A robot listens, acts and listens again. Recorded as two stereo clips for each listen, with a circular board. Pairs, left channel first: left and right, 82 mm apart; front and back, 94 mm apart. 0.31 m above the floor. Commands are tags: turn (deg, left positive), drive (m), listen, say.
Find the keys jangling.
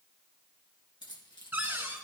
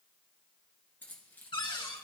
<turn deg="70"/>
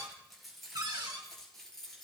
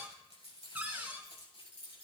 <say>Facing the keys jangling, 2 to 4 m away.</say>